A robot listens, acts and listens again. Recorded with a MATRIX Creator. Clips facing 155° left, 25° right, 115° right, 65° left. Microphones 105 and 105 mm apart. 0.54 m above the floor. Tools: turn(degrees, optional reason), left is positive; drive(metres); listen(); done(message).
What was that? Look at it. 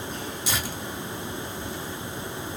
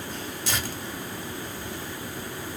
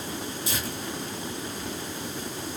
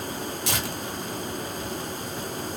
turn(degrees=80, reason="The tearing paper: 80° left.")
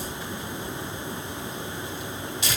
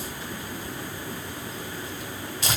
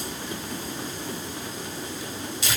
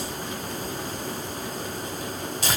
turn(degrees=25, reason="The tearing paper is now 25° left.")
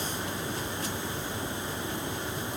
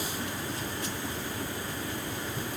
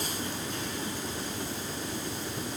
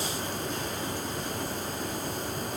listen()
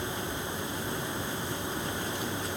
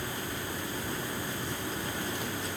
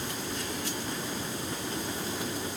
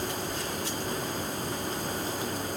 listen()
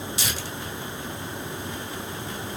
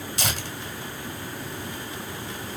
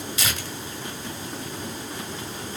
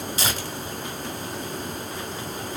turn(degrees=15, reason="The tearing paper is now 15° left.")
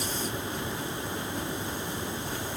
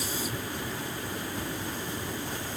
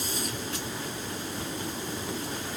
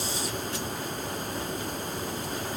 listen()
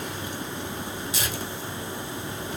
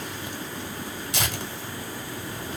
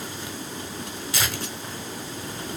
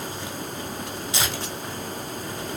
done("Found it: tearing paper, straight ahead, 1 to 2 m away.")